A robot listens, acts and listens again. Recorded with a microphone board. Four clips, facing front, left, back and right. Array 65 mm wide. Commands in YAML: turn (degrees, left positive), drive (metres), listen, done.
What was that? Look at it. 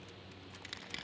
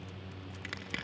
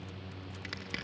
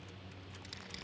turn: 120
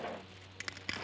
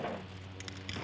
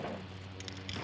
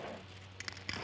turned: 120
turn: -25
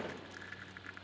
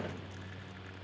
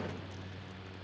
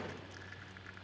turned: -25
listen: true
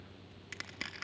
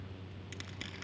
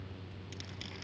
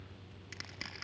turn: -20
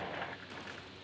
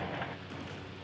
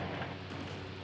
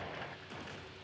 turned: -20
listen: true
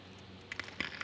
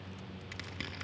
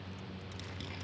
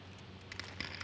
done: "Facing the crushing."